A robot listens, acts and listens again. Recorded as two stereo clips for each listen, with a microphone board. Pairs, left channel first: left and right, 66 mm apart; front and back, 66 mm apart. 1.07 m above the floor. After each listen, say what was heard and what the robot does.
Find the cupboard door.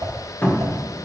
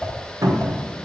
The cupboard door: 155° left. Turn 155° left.
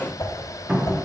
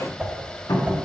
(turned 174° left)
The cupboard door is now 20° right. Turn 20° right.
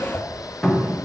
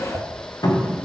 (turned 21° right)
Found it: a cupboard door, straight ahead.